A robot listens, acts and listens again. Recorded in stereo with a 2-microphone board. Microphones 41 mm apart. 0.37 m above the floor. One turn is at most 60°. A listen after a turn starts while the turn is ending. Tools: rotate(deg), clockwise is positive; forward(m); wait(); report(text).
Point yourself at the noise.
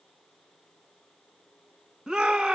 rotate(15)
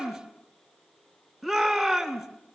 report("Found it: a shout, straight ahead.")